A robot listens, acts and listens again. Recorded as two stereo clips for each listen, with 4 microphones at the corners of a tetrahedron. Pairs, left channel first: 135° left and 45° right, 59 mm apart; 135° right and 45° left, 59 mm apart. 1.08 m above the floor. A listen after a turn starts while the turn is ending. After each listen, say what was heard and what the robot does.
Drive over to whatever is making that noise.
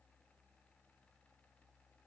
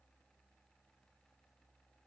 Keep listening.
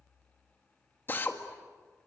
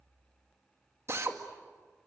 The drill: 85° left. Turn 85° left.
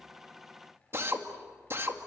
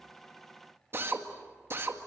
Drive 1.0 m forward.
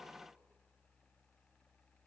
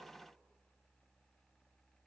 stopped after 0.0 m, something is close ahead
Keep listening.
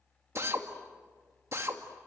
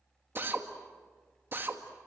Something is in my way. I am facing the drill but have not reached it.